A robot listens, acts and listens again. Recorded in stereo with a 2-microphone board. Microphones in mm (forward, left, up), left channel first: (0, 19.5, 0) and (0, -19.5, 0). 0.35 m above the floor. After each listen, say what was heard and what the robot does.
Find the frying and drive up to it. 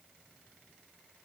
Keep listening.
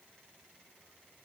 Keep listening.
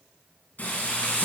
The frying: about 50° left or 130° left. Turn 50° left.
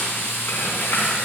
So it is at 80° left. Turn 80° left.
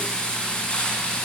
The frying is now 20° left. Turn 20° left.
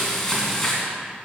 The frying is now 10° left. Turn 10° left.
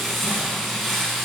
Drive 1.0 m forward.
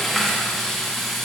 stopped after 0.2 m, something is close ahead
Something is in my way. I am facing the frying but have not reached it.